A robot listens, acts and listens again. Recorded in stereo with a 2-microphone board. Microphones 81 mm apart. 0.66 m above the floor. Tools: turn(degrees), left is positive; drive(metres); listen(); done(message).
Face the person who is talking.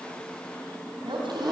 turn(degrees=-90)
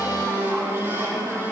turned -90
listen()
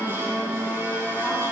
listen()
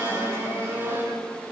done("Facing where the woman speaking came from. I can't hear it now.")